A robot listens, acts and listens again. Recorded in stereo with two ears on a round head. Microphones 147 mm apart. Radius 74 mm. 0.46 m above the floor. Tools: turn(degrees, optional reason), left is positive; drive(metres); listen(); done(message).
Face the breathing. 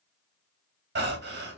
turn(degrees=-65, reason="The breathing: about 65° right or 115° right.")
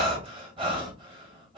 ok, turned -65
turn(degrees=-30, reason="So it is at 30° right.")
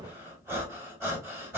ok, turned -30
turn(degrees=-15, reason="The breathing is now 15° right.")
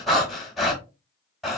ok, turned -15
done("Found it: breathing, straight ahead, 1 to 2 m away.")